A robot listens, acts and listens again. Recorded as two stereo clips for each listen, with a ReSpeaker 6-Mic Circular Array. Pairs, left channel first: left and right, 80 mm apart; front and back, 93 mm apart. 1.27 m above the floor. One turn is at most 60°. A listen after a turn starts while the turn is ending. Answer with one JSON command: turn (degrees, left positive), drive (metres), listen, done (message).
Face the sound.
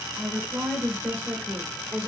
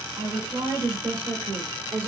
{"turn": -60}
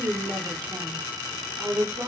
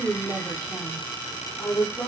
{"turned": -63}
{"turn": -50}
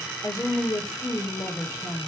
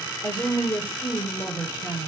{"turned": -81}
{"turn": 60}
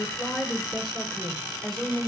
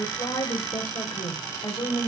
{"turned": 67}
{"done": "Facing the woman speaking, 1 to 2 m away."}